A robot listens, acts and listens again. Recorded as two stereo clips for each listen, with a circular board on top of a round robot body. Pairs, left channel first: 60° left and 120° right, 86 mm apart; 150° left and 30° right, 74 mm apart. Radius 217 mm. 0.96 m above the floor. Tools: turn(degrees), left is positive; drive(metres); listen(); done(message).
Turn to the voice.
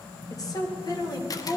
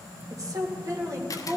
turn(degrees=20)
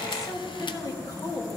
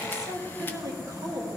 turn(degrees=20)
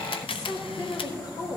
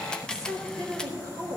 turn(degrees=20)
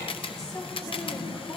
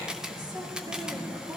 listen()
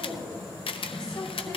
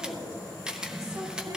turn(degrees=10)
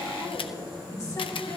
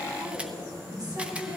listen()
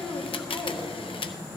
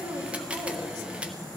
done("Facing the woman speaking, 2 to 4 m away.")